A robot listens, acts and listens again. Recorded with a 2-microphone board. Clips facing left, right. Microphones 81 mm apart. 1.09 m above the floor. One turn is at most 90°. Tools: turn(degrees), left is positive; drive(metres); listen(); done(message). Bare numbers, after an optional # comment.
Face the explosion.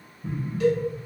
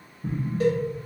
# The explosion: about 60° right or 120° right.
turn(-60)
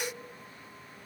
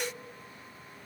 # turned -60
listen()
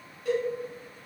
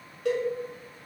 done("I heard an explosion, but can't make it out now. It was about straight ahead or 60° right.")